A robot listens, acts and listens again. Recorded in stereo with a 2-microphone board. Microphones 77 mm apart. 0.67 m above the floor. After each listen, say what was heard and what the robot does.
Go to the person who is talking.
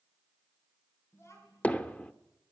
The child speaking: about 35° left or 145° left. Turn 35° left.
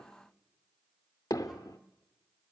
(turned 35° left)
Keep listening.
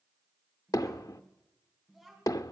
Drive 1.0 m forward.
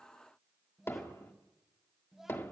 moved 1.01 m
Drive 1.0 m forward.
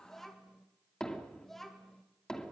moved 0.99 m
Drive 1.0 m forward.
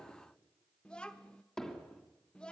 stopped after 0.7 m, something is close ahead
The child speaking is now 15° left. Turn 15° left.
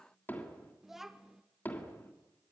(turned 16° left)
Arrived at the child speaking, straight ahead.